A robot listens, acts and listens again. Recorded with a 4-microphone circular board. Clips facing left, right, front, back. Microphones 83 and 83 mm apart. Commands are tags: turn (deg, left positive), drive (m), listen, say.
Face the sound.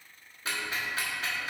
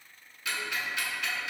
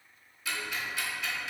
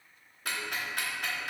<turn deg="140"/>
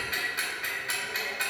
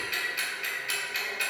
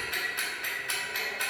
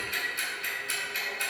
<turn deg="35"/>
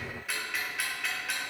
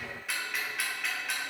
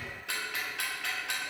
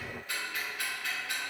<say>Found it: ticking, straight ahead, 1 to 2 m away.</say>